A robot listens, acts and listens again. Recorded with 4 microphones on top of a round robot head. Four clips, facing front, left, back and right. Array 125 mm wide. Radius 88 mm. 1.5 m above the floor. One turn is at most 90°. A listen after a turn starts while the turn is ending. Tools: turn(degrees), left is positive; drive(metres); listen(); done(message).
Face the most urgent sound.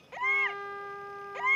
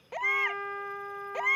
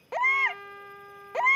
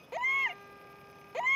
turn(degrees=-90)
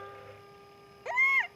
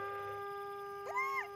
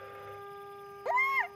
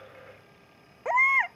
turn(degrees=-90)
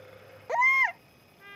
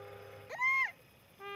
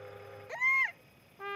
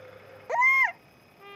turn(degrees=-55)
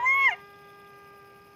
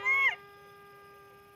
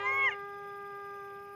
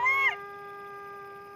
done("Facing the baby crying.")